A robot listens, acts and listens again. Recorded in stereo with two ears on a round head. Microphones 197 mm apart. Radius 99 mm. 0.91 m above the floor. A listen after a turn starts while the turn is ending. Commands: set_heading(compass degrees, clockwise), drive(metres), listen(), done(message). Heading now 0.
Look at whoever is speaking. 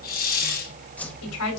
set_heading(270)
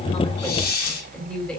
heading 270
done("Facing the woman speaking, over 4 m away.")